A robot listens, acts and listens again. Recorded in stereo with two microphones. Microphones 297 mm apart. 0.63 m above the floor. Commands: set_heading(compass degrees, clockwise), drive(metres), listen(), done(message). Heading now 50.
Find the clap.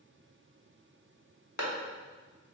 set_heading(335)
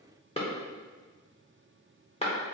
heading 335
set_heading(315)
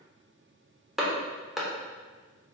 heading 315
done("Found it: a clap, straight ahead.")